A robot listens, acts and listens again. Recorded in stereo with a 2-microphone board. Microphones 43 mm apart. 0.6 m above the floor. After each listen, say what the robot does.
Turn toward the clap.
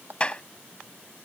Turn 25° left.
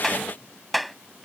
Facing the clap.